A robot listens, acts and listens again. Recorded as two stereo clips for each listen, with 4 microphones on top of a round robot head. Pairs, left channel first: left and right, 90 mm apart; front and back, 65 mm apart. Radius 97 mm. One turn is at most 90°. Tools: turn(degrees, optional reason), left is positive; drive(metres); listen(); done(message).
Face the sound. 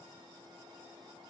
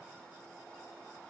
listen()
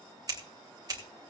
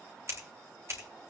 turn(degrees=-90, reason="The scissors: 135° right.")
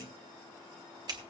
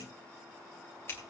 turn(degrees=-50, reason="The scissors is now 50° right.")
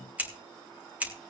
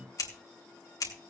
turn(degrees=-15, reason="The scissors is now 15° right.")
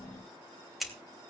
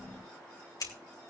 done("Found it: scissors, straight ahead.")